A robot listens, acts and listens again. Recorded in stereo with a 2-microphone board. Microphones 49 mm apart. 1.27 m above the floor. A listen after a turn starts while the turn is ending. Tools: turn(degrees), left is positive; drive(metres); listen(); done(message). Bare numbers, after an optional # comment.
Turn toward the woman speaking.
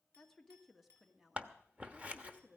# The woman speaking: about 20° right or 160° right.
turn(-20)
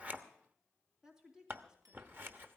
turn(-30)
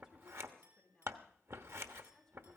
# So it is at 10° left.
turn(10)
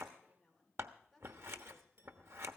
done("Facing the woman speaking.")